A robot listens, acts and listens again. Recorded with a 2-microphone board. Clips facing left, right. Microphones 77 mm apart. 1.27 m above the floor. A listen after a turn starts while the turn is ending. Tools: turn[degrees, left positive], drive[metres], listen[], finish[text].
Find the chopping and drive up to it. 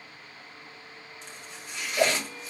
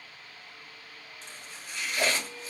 Thought: The chopping: about 20° left or 160° left.
Action: turn[20]
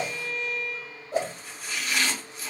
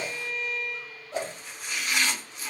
Action: drive[1.0]
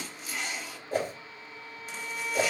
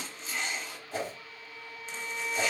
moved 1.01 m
Action: drive[1.0]
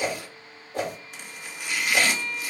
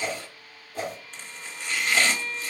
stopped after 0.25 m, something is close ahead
Thought: The chopping is now 10° left.
Action: turn[10]
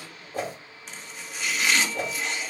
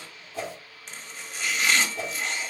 Action: finish[I am next to the chopping.]